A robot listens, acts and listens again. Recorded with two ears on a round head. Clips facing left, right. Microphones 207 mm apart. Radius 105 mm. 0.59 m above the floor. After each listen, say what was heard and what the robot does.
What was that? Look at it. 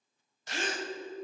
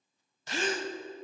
The gasp: about 60° right or 120° right. Turn 60° right.
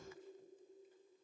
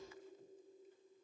Keep listening.
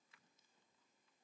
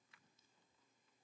I heard a gasp, but can't make it out now. It was about straight ahead or 60° right.